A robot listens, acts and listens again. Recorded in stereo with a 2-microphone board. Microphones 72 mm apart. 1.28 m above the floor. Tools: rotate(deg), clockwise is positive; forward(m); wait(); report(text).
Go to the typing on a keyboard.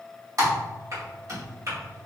rotate(55)
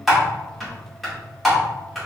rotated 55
forward(1.0)
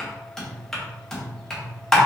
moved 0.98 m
forward(1.0)
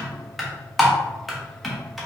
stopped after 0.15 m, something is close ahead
report("Arrived at the typing on a keyboard, straight ahead.")